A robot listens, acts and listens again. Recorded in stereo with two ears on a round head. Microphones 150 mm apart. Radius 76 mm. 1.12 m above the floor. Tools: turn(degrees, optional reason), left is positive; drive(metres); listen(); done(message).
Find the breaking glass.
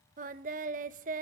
listen()
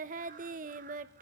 listen()
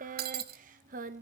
turn(degrees=-65, reason="The breaking glass: about 65° right or 115° right.")
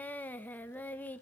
listen()
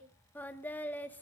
done("I heard breaking glass, but can't make it out now. It was about straight ahead or 50° right.")